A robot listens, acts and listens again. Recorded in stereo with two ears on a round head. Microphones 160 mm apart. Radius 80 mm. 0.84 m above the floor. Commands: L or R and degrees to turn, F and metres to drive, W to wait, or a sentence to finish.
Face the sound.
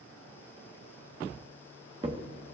R25
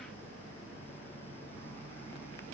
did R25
W
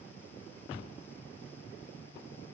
I heard a crack, but can't make it out now. It was about straight ahead or 130° right.